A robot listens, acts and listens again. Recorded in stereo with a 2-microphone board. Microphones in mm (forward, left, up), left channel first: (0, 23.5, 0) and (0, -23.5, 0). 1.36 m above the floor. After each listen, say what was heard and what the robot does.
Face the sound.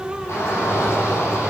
The shout: about 55° left or 125° left. Turn 55° left.
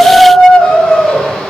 Found it: a shout, straight ahead.